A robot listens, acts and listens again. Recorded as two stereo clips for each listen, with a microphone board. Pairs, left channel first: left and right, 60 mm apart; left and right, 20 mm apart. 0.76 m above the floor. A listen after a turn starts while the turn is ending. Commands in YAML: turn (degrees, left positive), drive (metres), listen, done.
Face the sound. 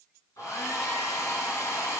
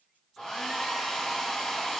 turn: 55
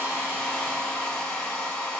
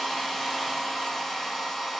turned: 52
turn: 20
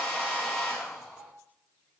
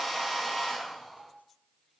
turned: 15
done: "Found it: a hair dryer, straight ahead."